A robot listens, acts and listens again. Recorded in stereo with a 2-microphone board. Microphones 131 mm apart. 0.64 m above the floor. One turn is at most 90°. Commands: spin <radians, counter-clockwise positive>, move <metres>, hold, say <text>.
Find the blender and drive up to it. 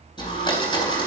spin 0.61
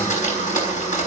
spin 1.57
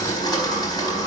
spin 0.52
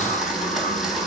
move 1.0
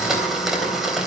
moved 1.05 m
move 1.0
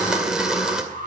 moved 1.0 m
move 1.0
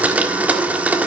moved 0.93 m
spin -0.26
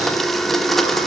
move 1.0
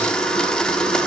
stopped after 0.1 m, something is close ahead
say Arrived at the blender, straight ahead.